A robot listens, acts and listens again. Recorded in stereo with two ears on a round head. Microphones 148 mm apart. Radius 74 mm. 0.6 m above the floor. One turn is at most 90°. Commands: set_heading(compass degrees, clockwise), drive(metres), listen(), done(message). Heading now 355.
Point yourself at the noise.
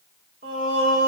set_heading(55)
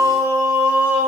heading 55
set_heading(65)
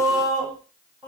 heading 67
done("Found it: singing, straight ahead, 2 to 4 m away.")